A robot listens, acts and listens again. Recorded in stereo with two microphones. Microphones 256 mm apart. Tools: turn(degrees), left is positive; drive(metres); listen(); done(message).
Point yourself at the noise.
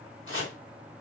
turn(degrees=55)
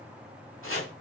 turn(degrees=65)
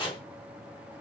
turn(degrees=20)
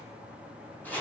done("Found it: chopping, straight ahead, over 4 m away.")